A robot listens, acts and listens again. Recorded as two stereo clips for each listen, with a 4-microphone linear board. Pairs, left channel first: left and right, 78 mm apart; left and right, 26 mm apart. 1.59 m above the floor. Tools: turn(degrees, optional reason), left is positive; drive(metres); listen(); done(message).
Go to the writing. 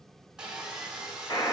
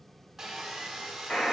listen()
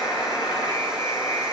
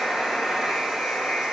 listen()
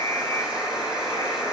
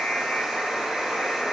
done("I can't make out writing to turn to.")